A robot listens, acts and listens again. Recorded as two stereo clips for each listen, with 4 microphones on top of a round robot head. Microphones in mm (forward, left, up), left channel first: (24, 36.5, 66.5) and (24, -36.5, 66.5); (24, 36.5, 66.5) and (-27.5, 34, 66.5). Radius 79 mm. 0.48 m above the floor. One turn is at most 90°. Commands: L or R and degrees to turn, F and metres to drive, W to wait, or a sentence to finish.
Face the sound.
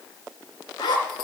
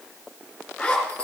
L75
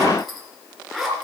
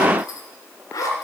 Found it: a zipper, straight ahead.